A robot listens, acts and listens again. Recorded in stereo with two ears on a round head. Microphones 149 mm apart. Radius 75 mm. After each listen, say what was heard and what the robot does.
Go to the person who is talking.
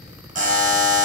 Keep listening.
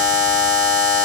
Keep listening.
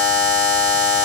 I can't make out anyone speaking, only a buzzer.